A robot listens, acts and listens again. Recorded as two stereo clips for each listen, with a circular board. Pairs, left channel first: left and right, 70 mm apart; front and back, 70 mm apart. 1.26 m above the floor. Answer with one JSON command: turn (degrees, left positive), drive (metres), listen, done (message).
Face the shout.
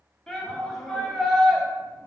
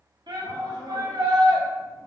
{"turn": 180}
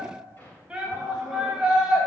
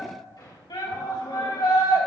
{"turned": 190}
{"turn": -10}
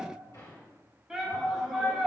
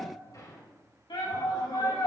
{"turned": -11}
{"done": "Facing the shout."}